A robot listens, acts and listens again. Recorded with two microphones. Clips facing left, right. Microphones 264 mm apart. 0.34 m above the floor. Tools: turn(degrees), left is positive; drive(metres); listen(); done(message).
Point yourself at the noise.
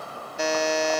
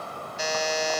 turn(degrees=65)
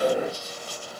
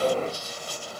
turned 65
listen()
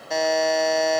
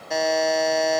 done("Found it: a buzzer, straight ahead.")